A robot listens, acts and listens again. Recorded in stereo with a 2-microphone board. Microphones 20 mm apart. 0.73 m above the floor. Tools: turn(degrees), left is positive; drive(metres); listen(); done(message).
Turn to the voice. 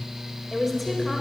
turn(degrees=30)
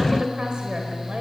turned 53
turn(degrees=-45)
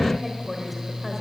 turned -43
done("Facing the woman speaking.")